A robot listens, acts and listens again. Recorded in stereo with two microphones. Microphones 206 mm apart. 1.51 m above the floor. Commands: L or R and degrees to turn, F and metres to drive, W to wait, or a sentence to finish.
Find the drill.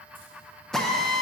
L30
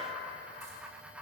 W
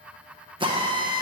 R25
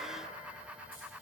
W
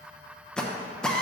Facing the drill, under 1 m away.